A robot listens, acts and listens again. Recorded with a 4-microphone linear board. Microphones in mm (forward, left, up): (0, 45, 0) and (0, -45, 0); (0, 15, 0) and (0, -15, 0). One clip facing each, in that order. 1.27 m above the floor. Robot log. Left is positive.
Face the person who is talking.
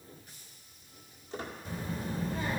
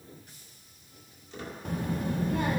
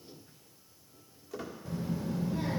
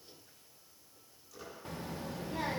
note: The child speaking: about 60° right or 120° right.
cmd yaw -60
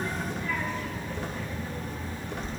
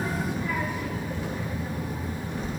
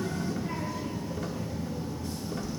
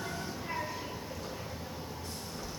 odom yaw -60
note: So it is at 10° right.
cmd yaw -10
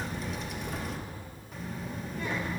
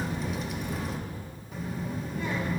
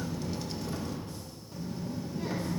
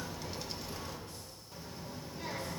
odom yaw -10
end: Found it: a child speaking, straight ahead.